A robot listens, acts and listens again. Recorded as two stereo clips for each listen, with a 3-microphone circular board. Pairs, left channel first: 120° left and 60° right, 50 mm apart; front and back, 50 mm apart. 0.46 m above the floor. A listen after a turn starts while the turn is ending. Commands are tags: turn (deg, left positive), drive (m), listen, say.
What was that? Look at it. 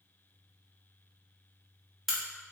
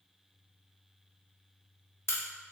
<turn deg="25"/>
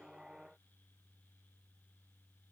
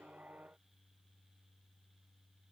<say>Facing where the crack came from. I can't hear it now.</say>